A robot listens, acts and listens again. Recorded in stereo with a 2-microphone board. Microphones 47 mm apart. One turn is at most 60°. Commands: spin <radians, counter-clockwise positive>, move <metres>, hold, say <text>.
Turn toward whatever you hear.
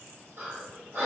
spin -1.05
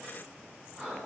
spin -0.52
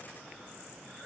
hold
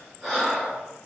spin -0.17
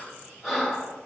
say Found it: breathing, straight ahead, 1 to 2 m away.